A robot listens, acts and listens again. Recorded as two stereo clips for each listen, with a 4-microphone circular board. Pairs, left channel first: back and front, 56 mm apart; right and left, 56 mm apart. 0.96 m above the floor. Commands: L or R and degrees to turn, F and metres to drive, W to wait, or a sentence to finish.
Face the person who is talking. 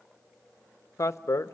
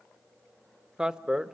L165
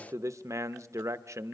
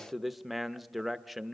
Facing the man speaking, under 1 m away.